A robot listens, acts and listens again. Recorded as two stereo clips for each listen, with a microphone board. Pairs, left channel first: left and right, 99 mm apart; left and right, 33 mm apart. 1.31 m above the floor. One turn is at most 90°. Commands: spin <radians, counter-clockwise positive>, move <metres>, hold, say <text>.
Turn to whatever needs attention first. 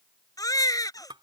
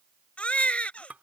spin 0.61
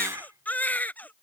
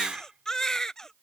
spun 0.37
spin 0.26
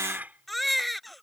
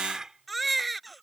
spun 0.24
say Found it: a baby crying, straight ahead.